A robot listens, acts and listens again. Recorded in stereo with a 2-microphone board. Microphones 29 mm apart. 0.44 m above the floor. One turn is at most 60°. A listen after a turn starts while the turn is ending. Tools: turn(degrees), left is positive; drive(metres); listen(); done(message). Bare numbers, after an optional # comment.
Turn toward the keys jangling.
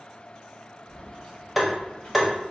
# The keys jangling: about 30° left or 150° left.
turn(30)
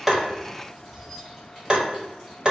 done("Found it: keys jangling, straight ahead.")